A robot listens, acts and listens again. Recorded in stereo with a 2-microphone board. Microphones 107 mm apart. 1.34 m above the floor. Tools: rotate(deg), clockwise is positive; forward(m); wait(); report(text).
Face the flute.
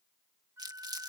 rotate(25)
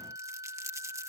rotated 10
rotate(145)
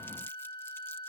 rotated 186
rotate(-40)
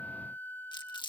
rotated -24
rotate(-20)
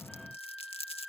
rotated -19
report("Found it: a flute, straight ahead.")